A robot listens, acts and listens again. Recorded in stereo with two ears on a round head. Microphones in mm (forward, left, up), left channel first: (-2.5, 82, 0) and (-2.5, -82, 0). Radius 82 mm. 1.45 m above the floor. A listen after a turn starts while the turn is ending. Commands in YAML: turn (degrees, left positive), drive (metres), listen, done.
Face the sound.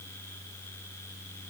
listen: true
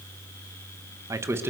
turn: -30
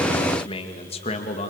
turn: 35
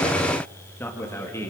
turn: 15
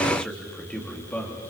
turn: 10
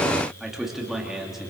done: "Facing the man speaking, 2 to 4 m away."